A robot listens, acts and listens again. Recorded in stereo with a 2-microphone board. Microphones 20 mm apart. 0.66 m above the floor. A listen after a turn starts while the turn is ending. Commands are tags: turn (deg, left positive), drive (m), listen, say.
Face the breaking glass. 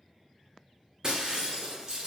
<turn deg="-35"/>
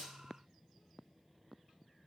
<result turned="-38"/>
<listen/>
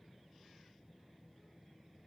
<say>I heard breaking glass, but can't make it out now. It was about 5° left or 110° right.</say>